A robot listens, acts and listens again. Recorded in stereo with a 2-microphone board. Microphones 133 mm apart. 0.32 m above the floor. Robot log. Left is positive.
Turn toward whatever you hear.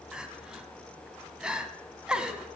cmd yaw -30
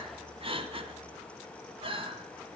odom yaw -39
note: So it is at 135° right.
cmd yaw -135
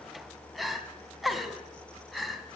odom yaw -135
end: Facing the crying, 1 to 2 m away.